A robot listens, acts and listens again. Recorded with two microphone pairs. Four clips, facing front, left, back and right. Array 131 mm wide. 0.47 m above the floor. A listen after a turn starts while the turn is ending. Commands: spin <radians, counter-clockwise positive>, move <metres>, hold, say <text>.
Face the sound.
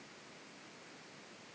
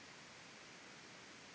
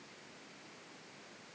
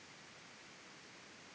hold
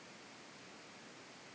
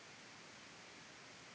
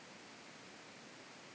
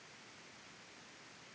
hold
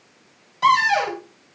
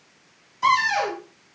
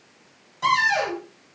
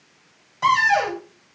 spin -1.13
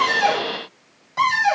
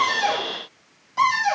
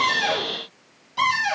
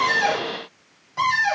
say Found it: a cupboard door, straight ahead, 1 to 2 m away.